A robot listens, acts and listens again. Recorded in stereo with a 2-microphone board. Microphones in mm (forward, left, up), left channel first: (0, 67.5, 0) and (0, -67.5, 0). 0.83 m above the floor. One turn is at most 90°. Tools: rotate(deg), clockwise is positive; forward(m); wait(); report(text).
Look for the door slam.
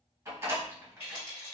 rotate(20)
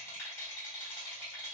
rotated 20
wait()
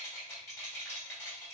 report("I heard a door slam, but can't make it out now. It was about straight ahead or 140° right.")